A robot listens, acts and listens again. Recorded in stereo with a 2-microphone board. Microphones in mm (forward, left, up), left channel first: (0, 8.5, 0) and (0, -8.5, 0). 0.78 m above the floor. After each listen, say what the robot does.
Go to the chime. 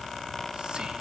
Keep listening.
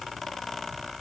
Keep listening.
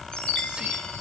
Turn 70° left.
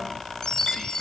Turn 40° left.
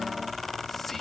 Keep listening.
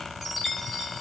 Turn 10° right.
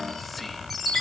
Drive 1.0 m forward.
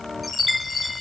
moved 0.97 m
Drive 1.0 m forward.
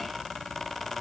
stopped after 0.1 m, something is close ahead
Keep listening.
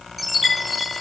Arrived at the chime, straight ahead.